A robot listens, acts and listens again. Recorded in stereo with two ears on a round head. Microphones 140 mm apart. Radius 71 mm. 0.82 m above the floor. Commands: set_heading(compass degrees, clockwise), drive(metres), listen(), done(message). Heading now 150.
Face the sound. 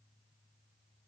listen()
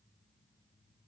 listen()
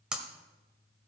set_heading(180)
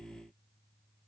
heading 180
listen()
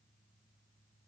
done("I heard breaking glass, but can't make it out now. It was about 25° left or 145° right.")